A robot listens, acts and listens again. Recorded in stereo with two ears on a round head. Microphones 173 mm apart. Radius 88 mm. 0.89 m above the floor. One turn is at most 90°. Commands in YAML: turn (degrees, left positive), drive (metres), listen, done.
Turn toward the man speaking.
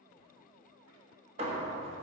listen: true
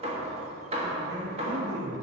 turn: -65
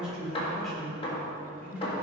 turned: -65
done: "Facing the man speaking, 2 to 4 m away."